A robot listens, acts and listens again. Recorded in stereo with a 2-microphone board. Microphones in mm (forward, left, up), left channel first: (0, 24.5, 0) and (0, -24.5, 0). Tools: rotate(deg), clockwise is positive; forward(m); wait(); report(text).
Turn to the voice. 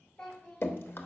rotate(-25)
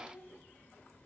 rotate(-130)
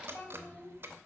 rotate(-35)
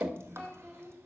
rotate(-10)
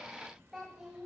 report("Facing the child speaking.")